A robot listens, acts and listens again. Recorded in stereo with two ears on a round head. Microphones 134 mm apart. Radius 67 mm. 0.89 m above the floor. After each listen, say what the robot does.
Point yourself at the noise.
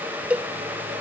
Turn 30° right.
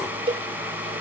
Turn 140° right.
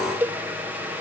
Turn 15° right.
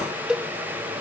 Found it: a cowbell, straight ahead.